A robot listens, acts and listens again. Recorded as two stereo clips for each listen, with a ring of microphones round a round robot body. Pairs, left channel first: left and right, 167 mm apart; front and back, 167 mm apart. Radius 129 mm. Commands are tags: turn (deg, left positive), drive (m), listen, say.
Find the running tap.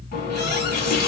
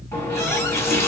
<turn deg="75"/>
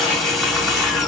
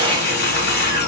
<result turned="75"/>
<say>Found it: a running tap, straight ahead, 2 to 4 m away.</say>